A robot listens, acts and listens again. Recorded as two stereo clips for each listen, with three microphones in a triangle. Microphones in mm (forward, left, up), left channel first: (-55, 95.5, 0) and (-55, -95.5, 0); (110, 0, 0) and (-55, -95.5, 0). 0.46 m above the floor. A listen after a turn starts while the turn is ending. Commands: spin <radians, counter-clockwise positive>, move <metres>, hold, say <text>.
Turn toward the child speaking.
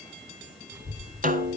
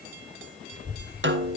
spin -0.44
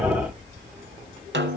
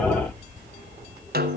say Facing the child speaking, over 4 m away.